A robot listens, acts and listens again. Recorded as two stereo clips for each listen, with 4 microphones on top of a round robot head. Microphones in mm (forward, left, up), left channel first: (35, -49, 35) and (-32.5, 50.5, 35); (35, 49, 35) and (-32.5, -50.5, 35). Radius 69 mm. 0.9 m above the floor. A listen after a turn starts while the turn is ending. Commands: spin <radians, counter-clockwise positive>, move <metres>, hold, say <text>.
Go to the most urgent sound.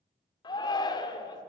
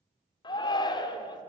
move 1.0
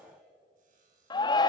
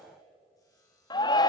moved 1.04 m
move 1.0
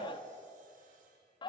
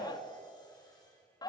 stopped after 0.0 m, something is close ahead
say I am next to the shout.